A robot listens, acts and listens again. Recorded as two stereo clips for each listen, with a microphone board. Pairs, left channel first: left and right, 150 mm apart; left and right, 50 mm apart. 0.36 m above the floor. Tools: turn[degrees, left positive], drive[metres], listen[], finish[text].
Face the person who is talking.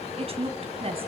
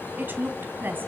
Thought: The woman speaking: about 40° right or 140° right.
Action: turn[-40]
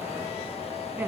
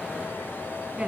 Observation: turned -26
Thought: So it is at 15° right.
Action: turn[-15]
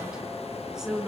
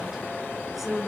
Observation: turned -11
Action: finish[Found it: a woman speaking, straight ahead, over 4 m away.]